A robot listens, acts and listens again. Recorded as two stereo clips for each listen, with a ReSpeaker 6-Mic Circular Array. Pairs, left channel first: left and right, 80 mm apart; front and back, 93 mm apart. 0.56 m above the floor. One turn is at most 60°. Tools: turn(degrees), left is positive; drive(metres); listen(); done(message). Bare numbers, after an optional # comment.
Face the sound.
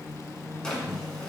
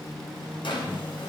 # The drawer: 10° left.
turn(10)
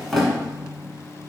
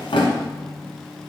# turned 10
done("Facing the drawer, 1 to 2 m away.")